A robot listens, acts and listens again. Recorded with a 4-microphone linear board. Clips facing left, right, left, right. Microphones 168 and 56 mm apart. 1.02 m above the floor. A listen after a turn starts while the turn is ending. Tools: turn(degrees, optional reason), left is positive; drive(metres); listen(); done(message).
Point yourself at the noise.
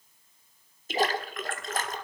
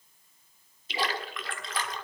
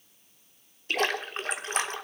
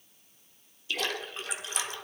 turn(degrees=45, reason="The splash: about 45° left or 135° left.")
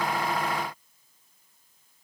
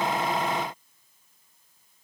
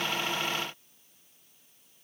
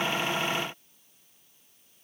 listen()
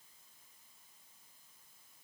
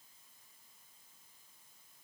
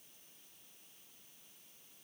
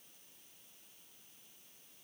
done("I heard a splash, but can't make it out now. It was about straight ahead or 90° left.")